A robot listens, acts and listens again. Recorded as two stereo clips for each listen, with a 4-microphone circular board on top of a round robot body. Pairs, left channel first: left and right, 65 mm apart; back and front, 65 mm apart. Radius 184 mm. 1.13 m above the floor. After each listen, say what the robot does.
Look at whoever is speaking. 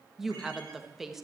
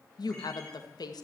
Turn 180° left.
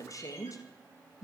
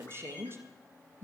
Turn 50° left.
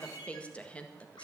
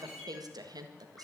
Turn 15° left.
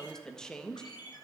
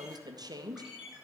Facing the woman speaking, 1 to 2 m away.